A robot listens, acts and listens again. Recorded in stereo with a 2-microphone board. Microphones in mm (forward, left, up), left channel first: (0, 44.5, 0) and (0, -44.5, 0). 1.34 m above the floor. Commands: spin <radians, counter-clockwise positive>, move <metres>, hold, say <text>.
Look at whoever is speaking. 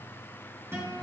hold
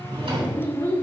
spin 0.52
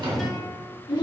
spin 2.01
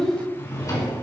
spin 0.17
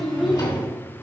say Found it: a child speaking, straight ahead.